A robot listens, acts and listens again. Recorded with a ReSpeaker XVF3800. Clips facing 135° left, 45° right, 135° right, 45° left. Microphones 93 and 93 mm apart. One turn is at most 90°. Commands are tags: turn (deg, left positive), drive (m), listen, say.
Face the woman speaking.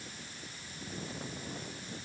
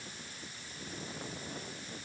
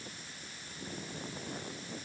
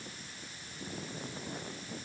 <listen/>
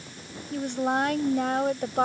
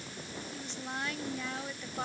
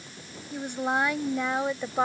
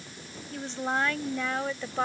<turn deg="90"/>
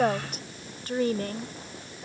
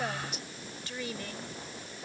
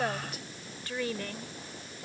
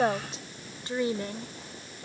<turn deg="90"/>
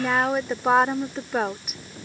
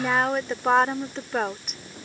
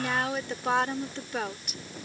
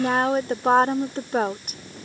<turn deg="50"/>
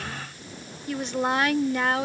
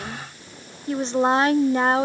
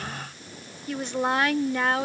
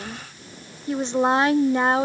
<say>Facing the woman speaking.</say>